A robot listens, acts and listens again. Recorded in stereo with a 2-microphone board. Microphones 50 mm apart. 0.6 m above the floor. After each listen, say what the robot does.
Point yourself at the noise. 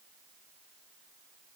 Keep listening.
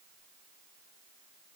Keep listening.
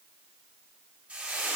Turn 25° right.
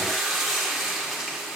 Found it: frying, straight ahead.